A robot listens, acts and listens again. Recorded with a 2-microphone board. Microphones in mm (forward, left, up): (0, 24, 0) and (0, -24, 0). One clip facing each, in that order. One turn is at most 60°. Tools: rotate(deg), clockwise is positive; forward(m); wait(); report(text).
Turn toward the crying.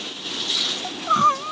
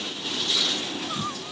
rotate(-55)
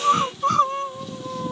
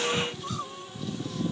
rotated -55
rotate(-60)
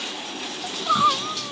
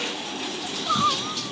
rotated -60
rotate(-15)
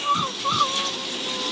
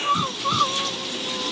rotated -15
report("Found it: crying, straight ahead.")